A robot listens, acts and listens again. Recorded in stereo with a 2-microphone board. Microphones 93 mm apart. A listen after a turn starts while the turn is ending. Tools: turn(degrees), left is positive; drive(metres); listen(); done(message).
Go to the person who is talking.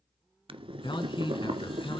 turn(degrees=65)
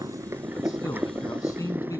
turn(degrees=40)
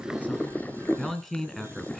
drive(metres=1.0)
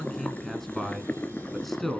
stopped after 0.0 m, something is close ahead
done("Something is in my way. I am facing the man speaking but have not reached it.")